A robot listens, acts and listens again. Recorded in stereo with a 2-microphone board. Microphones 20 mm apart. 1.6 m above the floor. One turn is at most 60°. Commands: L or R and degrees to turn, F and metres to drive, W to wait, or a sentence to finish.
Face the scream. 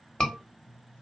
L35
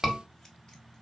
Found it: a scream, straight ahead, 1 to 2 m away.